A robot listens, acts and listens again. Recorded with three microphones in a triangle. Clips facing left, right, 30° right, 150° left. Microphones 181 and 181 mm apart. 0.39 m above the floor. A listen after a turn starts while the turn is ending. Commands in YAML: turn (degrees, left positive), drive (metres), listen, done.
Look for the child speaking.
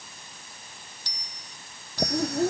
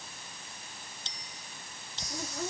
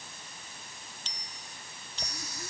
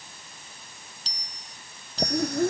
turn: 145
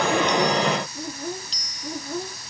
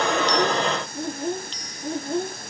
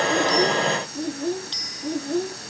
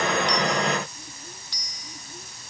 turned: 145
turn: -25
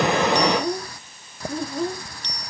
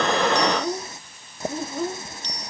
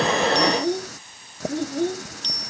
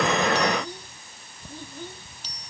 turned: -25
done: "Found it: a child speaking, straight ahead."